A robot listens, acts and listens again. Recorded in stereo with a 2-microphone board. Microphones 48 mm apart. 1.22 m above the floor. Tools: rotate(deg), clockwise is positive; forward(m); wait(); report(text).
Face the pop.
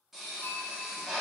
rotate(30)
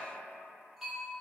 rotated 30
wait()
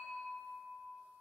report("I heard a pop, but can't make it out now. It was about 25° left or 145° right.")